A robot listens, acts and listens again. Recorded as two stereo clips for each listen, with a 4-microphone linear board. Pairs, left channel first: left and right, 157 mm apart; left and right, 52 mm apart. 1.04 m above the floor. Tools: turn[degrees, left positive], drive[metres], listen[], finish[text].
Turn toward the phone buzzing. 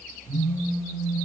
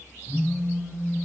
Thought: The phone buzzing: about 30° left or 150° left.
Action: turn[30]
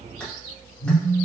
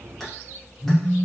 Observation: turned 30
Thought: So it is at 120° left.
Action: turn[120]
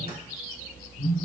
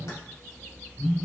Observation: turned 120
Thought: The phone buzzing is now 55° left.
Action: turn[55]
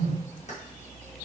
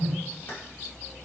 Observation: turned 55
Action: finish[Facing the phone buzzing, 1 to 2 m away.]